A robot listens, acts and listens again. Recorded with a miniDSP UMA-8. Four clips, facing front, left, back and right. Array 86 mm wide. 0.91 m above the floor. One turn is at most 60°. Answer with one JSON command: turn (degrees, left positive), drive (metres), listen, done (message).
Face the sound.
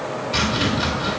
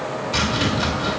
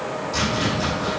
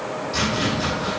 {"turn": 45}
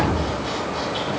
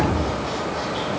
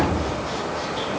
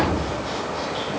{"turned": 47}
{"listen": true}
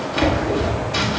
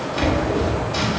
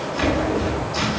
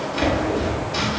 {"done": "Facing the chopping, 2 to 4 m away."}